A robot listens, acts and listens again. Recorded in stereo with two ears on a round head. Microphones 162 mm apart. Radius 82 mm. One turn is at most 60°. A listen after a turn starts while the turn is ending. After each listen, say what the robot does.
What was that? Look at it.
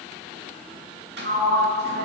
Turn 60° right.
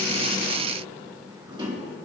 Turn 30° right.
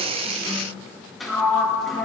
Found it: a sliding door, straight ahead.